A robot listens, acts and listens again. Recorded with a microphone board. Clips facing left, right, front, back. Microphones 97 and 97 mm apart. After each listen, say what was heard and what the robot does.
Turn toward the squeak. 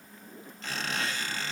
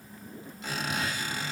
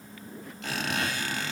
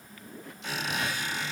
The squeak: 15° right. Turn 15° right.
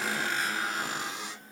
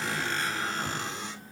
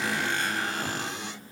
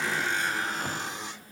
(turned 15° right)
Facing the squeak, 2 to 4 m away.